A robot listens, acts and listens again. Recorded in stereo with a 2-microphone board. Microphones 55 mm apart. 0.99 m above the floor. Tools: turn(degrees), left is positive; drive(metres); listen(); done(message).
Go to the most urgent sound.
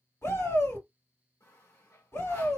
turn(degrees=65)
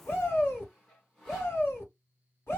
turn(degrees=50)
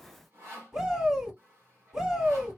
turn(degrees=-10)
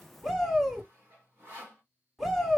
drive(metres=1.0)
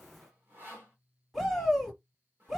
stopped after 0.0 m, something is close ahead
done("Something is in my way. I am facing the shout but have not reached it.")